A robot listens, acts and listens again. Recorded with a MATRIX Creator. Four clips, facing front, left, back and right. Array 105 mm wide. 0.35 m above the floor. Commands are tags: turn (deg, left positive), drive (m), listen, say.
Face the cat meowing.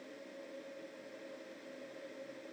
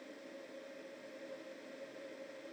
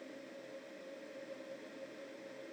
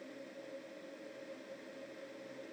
<listen/>
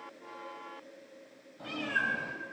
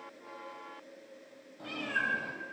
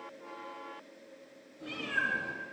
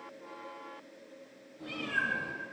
<turn deg="45"/>
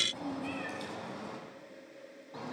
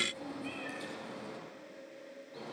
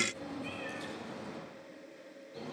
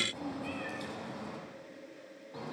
<turn deg="-15"/>
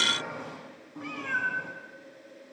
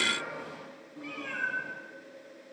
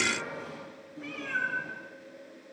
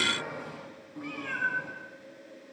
<say>Found it: a cat meowing, straight ahead, over 4 m away.</say>